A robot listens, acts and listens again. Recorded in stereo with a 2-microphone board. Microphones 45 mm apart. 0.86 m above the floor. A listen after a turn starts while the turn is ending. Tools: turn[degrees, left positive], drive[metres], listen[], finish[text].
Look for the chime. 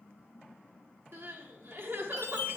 Thought: The chime: about 75° left or 105° left.
Action: turn[75]
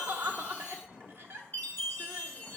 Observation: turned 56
Thought: So it is at 45° left.
Action: turn[45]
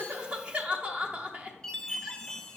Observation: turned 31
Thought: The chime is now 15° left.
Action: turn[15]
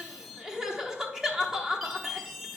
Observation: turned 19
Action: finish[Found it: a chime, straight ahead.]